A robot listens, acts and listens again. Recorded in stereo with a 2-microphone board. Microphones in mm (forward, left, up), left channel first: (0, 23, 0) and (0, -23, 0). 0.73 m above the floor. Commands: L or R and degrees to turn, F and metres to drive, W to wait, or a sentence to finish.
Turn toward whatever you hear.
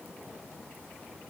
W
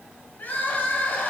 L45
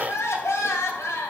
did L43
L95
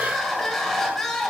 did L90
Facing the crying.